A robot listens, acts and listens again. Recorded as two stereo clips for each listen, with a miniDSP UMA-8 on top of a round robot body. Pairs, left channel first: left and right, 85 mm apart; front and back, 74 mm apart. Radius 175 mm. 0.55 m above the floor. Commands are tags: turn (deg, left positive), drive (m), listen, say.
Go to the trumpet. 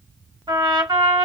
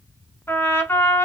<turn deg="-60"/>
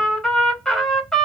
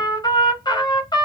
<drive m="1.0"/>
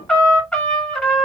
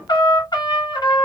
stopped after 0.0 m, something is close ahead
<turn deg="10"/>
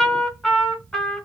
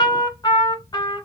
<say>Blocked. The trumpet is further on, straight ahead.</say>